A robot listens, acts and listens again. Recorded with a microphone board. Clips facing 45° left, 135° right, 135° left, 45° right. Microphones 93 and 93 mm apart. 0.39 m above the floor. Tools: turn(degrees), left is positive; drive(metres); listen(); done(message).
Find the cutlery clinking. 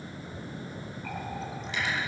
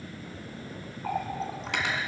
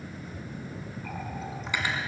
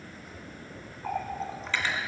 turn(degrees=-150)
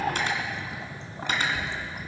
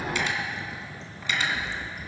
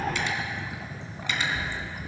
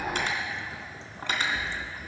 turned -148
done("Facing the cutlery clinking.")